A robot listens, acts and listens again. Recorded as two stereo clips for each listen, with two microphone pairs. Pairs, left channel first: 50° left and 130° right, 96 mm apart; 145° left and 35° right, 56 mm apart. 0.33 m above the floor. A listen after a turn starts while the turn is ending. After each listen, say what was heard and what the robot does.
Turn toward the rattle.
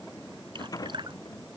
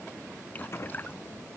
The rattle: 100° left. Turn 100° left.
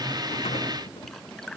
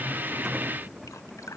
Keep listening.
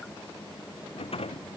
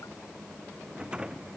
The rattle is now 35° left. Turn 35° left.
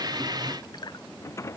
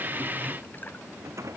The rattle is now 10° right. Turn 10° right.
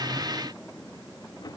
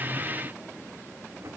Found it: a rattle, straight ahead.